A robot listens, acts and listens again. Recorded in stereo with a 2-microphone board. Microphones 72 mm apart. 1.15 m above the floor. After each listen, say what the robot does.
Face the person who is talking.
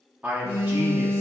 Turn 25° right.
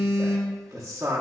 Turn 130° right.
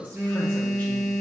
Turn 25° left.
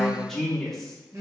Facing the man speaking, under 1 m away.